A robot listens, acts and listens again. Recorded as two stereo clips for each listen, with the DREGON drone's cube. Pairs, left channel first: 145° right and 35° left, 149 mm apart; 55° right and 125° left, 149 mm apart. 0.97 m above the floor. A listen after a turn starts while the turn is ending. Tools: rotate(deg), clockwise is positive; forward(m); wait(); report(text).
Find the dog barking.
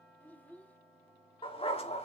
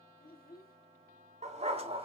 rotate(-170)
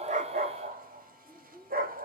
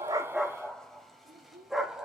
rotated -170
rotate(-40)
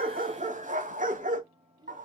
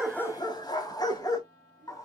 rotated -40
rotate(-10)
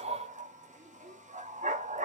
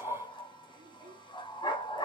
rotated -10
report("Found it: a dog barking, straight ahead.")